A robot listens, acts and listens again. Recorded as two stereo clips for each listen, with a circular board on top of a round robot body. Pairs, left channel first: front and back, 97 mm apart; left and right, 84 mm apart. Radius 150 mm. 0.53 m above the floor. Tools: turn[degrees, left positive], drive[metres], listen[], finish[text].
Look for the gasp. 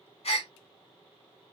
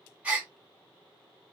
Thought: The gasp: 15° right.
Action: turn[-15]
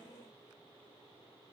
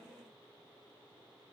Action: finish[Facing where the gasp came from. I can't hear it now.]